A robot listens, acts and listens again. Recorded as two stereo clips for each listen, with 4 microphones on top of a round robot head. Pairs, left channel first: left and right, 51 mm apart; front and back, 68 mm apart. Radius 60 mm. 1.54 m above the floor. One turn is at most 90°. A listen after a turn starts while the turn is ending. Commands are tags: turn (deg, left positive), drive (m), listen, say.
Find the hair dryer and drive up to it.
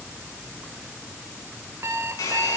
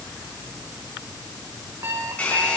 <turn deg="70"/>
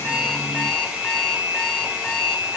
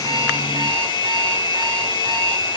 <turn deg="-10"/>
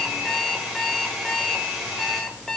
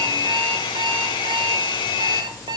<drive m="1.0"/>
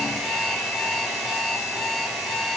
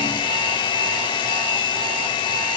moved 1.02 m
<drive m="1.0"/>
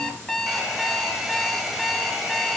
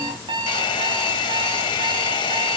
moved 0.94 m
<drive m="1.0"/>
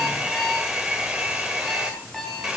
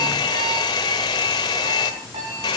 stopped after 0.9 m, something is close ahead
<turn deg="-10"/>
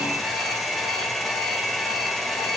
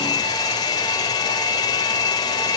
<say>I am next to the hair dryer.</say>